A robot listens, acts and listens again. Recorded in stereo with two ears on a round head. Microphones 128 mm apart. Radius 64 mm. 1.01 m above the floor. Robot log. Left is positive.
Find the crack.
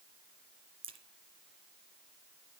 note: The crack: about 40° right or 140° right.
cmd yaw -40
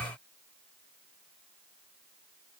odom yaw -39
cmd idle
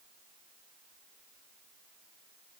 end: I heard a crack, but can't make it out now. It was about straight ahead or 100° right.